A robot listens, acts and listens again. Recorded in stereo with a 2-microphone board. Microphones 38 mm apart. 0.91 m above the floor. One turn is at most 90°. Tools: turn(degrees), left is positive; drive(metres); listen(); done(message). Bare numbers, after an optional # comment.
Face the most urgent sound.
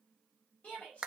# The shout: about 35° left or 145° left.
turn(35)
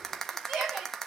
done("Found it: a shout, straight ahead, over 4 m away.")